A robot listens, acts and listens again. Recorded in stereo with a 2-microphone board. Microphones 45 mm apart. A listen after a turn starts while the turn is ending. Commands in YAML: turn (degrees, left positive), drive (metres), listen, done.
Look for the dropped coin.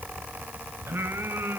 listen: true
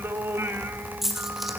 turn: -30
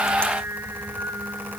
listen: true
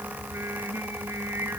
done: "I heard a dropped coin, but can't make it out now. It was about 25° left or 145° right."